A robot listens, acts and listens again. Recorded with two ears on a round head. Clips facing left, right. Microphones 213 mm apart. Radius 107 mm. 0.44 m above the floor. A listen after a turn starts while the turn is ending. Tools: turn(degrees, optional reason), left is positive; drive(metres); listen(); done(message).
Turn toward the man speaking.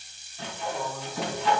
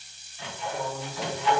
turn(degrees=-30, reason="The man speaking: about 30° right or 150° right.")
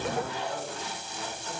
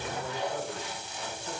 turn(degrees=-25, reason="The man speaking: about 25° right or 155° right.")
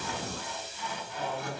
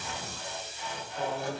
turn(degrees=-30, reason="The man speaking: about 30° right or 150° right.")
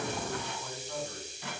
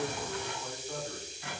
turn(degrees=-10, reason="So it is at 10° right.")
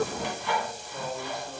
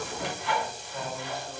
turn(degrees=-10, reason="The man speaking is now 10° right.")
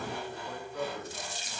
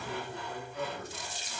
done("Facing the man speaking.")